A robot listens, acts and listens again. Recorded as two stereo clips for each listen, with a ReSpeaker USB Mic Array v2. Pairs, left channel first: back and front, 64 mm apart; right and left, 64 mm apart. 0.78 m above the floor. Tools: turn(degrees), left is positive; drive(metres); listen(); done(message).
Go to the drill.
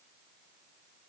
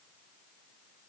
listen()
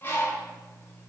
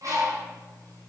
listen()
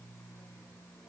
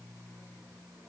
done("I can't make out a drill to turn to.")